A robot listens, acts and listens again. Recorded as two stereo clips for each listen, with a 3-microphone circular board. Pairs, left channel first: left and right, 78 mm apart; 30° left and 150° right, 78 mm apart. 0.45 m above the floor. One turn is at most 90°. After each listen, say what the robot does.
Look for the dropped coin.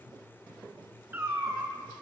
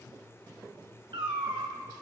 Keep listening.
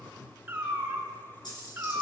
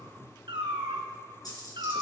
Turn 65° left.
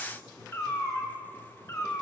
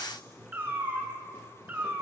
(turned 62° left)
Facing where the dropped coin came from. I can't hear it now.